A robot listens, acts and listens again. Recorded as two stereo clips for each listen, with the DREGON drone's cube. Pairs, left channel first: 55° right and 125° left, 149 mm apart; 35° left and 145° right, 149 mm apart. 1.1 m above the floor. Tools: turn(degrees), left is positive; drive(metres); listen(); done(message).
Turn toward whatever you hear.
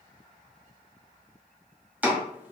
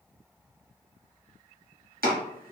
turn(degrees=-155)
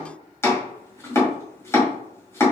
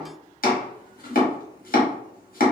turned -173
turn(degrees=15)
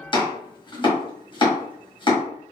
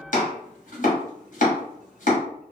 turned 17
done("Facing the chopping, 1 to 2 m away.")